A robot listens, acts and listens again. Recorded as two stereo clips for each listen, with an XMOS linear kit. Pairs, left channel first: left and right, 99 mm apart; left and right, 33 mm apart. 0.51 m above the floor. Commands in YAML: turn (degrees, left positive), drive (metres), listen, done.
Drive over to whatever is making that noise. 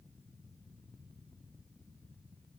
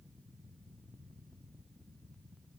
listen: true
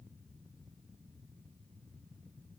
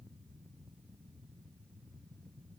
listen: true
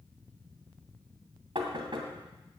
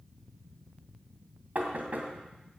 turn: -55
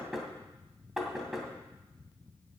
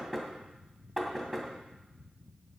drive: 1.0
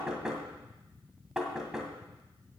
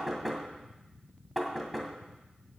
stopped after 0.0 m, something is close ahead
done: "Blocked. The knocking is further on, straight ahead."